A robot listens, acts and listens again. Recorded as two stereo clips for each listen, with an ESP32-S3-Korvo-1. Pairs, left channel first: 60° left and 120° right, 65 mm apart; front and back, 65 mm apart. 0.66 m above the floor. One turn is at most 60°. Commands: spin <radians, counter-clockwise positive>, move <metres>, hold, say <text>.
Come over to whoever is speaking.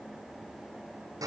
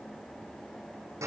hold
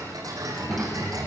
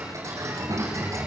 spin 1.05
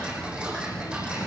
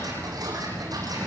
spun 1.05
spin 1.05
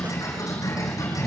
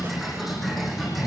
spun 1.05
spin 0.52
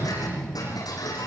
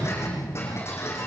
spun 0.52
spin -0.26
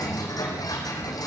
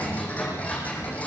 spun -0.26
move 1.0
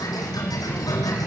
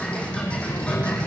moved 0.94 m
move 1.0
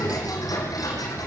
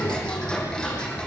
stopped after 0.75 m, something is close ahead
spin 0.17
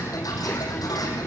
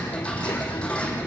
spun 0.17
say I am next to the child speaking.